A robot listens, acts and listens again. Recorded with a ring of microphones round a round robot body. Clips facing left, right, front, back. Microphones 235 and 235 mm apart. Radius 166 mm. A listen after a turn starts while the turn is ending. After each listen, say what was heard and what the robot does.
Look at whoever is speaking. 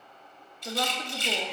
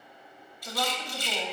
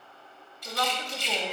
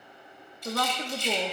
The woman speaking: 155° left. Turn 155° left.
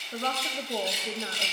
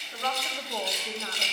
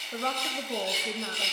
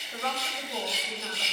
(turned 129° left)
The woman speaking is now 25° left. Turn 25° left.
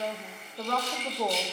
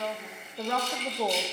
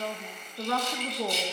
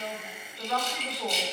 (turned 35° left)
Facing the woman speaking, 1 to 2 m away.